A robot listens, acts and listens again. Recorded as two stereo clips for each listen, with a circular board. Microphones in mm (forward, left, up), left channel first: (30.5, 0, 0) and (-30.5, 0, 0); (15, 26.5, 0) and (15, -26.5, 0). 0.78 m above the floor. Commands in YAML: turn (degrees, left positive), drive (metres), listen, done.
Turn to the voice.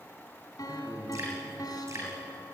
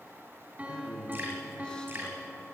turn: 20
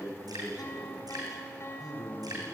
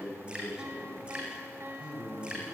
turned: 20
turn: -20
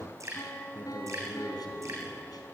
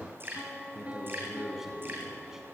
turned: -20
turn: -10
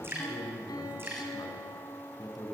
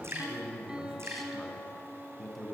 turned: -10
done: "Facing the man speaking."